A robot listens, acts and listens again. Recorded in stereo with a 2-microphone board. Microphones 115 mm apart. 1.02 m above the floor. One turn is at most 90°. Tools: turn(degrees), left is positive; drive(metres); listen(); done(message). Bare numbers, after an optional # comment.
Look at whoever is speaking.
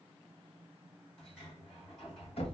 listen()
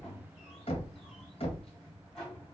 listen()
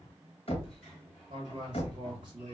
# The man speaking: about 45° right or 135° right.
turn(-45)
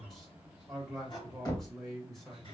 done("Facing the man speaking, 1 to 2 m away.")